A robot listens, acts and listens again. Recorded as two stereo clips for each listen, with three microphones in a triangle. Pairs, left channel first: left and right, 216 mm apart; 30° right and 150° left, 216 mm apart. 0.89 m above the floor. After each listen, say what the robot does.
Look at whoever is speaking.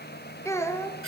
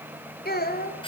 Turn 15° left.
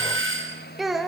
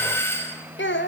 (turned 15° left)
Facing the child speaking.